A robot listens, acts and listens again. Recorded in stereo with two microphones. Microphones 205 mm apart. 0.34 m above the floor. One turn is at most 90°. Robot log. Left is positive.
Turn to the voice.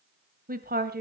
note: The woman speaking: about 50° right or 130° right.
cmd yaw -50
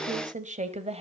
note: So it is at 30° right.
cmd yaw -30
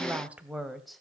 end: Facing the woman speaking, 1 to 2 m away.